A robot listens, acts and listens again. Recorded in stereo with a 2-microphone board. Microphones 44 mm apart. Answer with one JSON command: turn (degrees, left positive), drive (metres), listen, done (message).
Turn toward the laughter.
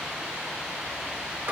{"listen": true}
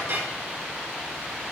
{"listen": true}
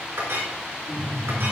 {"turn": 45}
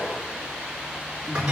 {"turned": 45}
{"turn": 90}
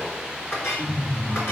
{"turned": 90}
{"turn": 10}
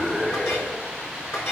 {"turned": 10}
{"done": "Found it: laughter, straight ahead, over 4 m away."}